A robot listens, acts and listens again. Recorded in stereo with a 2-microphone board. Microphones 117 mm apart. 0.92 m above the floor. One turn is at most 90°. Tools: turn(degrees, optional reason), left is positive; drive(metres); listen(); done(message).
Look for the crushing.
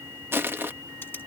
turn(degrees=-20, reason="The crushing: about 20° right or 160° right.")
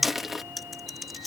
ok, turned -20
done("Facing the crushing.")